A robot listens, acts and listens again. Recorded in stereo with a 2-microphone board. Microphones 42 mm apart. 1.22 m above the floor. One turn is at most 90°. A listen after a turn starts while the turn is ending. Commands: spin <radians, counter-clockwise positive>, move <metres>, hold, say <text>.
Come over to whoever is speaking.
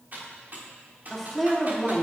spin 0.52
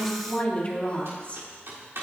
spin 1.57
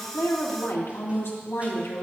spin 1.48
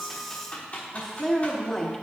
spin 0.26
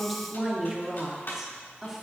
move 1.0
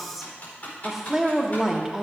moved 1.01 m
move 1.0
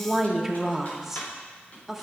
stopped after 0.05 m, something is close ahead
say Arrived at the woman speaking, straight ahead.